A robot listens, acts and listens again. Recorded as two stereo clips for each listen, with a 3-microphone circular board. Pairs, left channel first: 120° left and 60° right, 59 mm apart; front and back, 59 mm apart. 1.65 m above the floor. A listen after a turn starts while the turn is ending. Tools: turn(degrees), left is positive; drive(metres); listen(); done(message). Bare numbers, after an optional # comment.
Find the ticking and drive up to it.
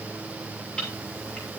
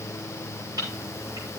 # The ticking: 160° right.
turn(-160)
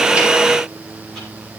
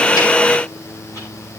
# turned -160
listen()
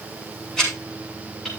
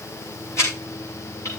# The ticking is now 40° left.
turn(40)
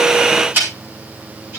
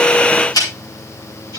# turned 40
drive(1.0)
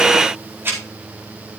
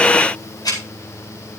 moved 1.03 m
drive(1.0)
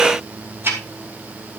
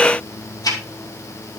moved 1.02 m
drive(1.0)
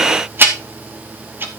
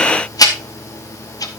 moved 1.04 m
drive(1.0)
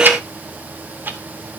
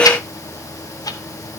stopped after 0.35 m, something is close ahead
listen()
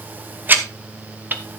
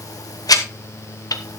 done("I am next to the ticking.")